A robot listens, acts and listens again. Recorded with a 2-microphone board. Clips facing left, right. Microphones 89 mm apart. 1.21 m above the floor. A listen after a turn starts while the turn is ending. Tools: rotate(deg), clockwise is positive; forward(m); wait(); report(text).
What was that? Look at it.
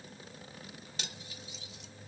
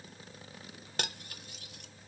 rotate(50)
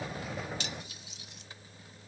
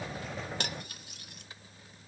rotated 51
wait()
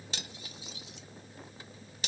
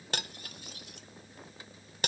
rotate(60)
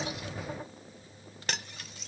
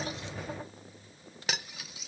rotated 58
report("Found it: cutlery clinking, straight ahead.")